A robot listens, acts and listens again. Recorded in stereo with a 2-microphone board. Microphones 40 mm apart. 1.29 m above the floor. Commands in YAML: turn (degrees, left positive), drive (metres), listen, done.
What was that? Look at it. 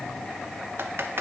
turn: -90
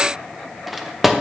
done: "Found it: typing on a keyboard, straight ahead."